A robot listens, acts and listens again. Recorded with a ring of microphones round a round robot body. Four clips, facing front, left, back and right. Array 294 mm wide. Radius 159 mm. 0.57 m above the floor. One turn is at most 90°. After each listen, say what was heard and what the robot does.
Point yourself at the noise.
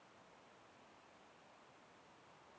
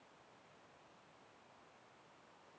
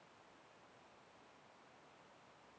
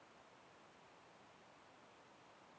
Keep listening.
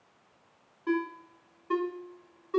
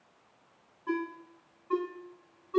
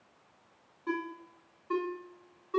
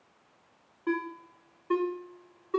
The ringtone: 80° right. Turn 80° right.
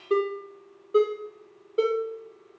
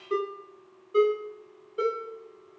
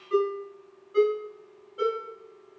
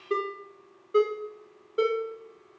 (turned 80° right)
The ringtone is now 25° right. Turn 25° right.
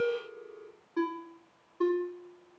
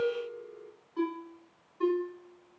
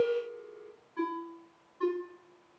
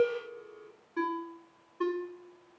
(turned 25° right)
The ringtone is now 15° right. Turn 15° right.
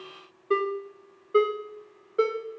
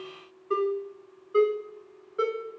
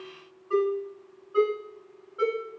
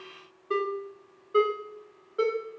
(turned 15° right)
Found it: a ringtone, straight ahead.